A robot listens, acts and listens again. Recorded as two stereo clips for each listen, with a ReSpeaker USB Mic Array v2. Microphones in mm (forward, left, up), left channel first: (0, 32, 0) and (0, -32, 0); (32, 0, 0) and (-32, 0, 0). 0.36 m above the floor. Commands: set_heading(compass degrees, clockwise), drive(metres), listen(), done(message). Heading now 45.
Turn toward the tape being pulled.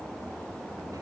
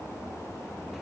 listen()
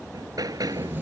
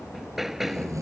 set_heading(195)
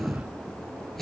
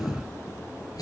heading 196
done("Facing the tape being pulled.")